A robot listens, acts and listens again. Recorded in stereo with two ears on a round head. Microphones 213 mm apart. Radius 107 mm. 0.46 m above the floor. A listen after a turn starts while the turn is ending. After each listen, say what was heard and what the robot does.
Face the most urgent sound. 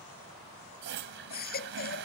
The baby crying: about 40° left or 140° left. Turn 40° left.
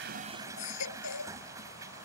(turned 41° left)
So it is at 95° left. Turn 95° left.
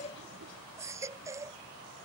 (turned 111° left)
The baby crying is now 15° right. Turn 15° right.
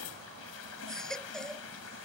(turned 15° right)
Facing the baby crying.